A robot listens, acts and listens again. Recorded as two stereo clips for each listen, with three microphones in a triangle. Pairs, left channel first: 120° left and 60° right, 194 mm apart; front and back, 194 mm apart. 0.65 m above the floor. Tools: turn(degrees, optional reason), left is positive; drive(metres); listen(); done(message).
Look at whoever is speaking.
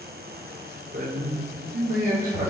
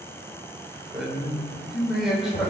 turn(degrees=-95, reason="The man speaking: 95° right.")
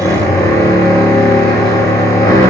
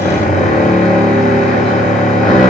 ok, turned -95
listen()
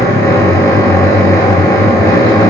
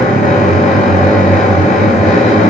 listen()
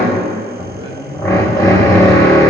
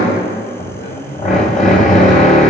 done("Found it: a man speaking, straight ahead.")